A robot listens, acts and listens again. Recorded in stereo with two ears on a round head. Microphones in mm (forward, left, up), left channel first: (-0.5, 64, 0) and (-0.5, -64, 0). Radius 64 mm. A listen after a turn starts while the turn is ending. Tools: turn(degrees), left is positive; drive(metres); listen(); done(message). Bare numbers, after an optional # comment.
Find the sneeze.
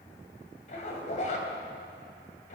listen()
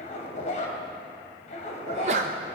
# The sneeze: about 50° right or 130° right.
turn(-50)
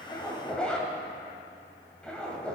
listen()
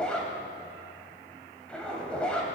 done("I heard a sneeze, but can't make it out now. It was about straight ahead or 80° right.")